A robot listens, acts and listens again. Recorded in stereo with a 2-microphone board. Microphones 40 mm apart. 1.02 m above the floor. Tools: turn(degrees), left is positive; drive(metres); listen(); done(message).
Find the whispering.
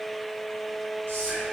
turn(degrees=-65)
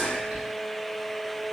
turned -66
done("Found it: whispering, straight ahead.")